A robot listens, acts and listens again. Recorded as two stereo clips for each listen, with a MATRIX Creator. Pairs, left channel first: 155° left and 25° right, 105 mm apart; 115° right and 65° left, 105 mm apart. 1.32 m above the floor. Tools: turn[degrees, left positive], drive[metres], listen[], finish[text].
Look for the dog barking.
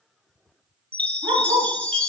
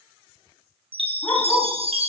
Thought: The dog barking: 50° right.
Action: turn[-50]
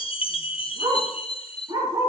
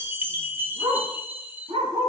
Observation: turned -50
Thought: The dog barking is now 30° left.
Action: turn[30]
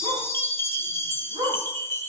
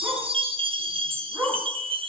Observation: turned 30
Action: finish[Found it: a dog barking, straight ahead.]